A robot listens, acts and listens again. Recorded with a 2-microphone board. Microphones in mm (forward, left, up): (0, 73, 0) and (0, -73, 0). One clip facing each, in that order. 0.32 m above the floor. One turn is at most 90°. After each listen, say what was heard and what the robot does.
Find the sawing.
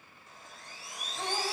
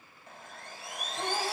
The sawing: about 60° right or 120° right. Turn 60° right.
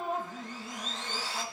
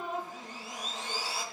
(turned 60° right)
So it is at 10° right. Turn 10° right.
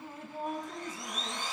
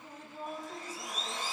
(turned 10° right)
Facing the sawing.